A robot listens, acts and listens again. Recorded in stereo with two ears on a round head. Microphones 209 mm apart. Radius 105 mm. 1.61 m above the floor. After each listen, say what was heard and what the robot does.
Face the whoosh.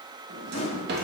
The whoosh: about 25° left or 155° left. Turn 25° left.
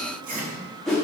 Found it: a whoosh, straight ahead.